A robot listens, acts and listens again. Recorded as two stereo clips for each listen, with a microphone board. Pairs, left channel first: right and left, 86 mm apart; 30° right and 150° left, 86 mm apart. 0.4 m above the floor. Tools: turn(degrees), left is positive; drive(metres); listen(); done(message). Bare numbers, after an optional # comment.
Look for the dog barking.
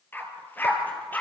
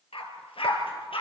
# The dog barking: 20° right.
turn(-20)
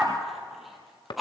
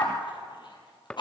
done("Found it: a dog barking, straight ahead, over 4 m away.")